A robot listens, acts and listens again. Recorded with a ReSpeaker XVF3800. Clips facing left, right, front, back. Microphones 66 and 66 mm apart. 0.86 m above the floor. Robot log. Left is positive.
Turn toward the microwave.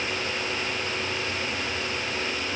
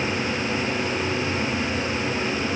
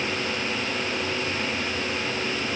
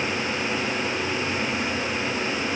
cmd idle
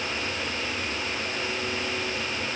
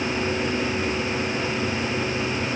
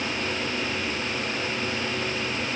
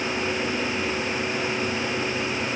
cmd idle
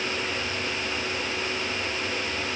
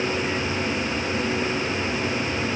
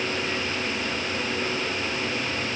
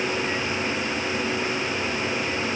end: I can't make out a microwave to turn to.